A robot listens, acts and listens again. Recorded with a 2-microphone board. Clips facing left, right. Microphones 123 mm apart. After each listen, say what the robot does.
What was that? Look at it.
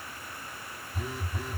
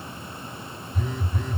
Turn 30° left.
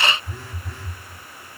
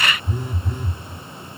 Turn 20° right.
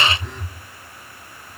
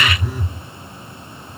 Turn 10° right.
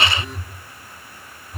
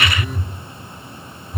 Facing the phone buzzing.